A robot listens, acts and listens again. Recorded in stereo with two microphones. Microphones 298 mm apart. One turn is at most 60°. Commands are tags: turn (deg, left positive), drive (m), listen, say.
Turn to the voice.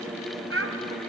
<turn deg="-50"/>
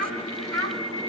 <turn deg="-50"/>
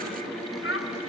<turn deg="50"/>
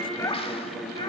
<listen/>
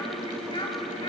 <turn deg="15"/>
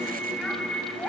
<listen/>
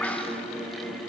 <listen/>
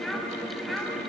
<say>Found it: a child speaking, straight ahead, 2 to 4 m away.</say>